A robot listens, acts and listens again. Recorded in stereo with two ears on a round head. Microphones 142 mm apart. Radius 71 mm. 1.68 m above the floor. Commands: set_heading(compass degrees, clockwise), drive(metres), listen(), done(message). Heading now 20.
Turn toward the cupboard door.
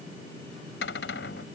set_heading(290)
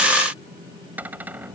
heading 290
set_heading(300)
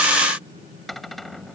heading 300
done("Found it: a cupboard door, straight ahead.")